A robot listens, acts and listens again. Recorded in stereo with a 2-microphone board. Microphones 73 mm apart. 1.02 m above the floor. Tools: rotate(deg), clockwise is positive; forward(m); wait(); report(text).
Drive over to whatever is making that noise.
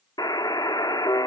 rotate(-65)
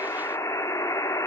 rotate(-45)
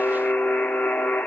rotate(-15)
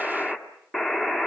forward(1.0)
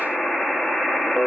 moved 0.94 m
forward(1.0)
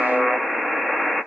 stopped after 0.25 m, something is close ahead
report("Arrived at the buzzer, straight ahead.")